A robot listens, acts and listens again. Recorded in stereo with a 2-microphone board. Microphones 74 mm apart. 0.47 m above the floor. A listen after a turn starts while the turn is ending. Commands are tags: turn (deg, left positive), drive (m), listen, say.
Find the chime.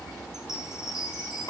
<turn deg="-30"/>
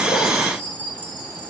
<turn deg="20"/>
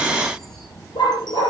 <listen/>
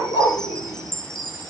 <say>Facing the chime, over 4 m away.</say>